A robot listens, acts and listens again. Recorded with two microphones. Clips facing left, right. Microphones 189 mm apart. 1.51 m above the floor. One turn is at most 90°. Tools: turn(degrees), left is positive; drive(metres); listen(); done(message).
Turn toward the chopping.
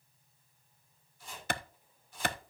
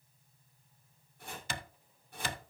turn(degrees=-60)
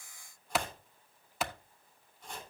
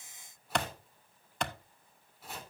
done("Found it: chopping, straight ahead.")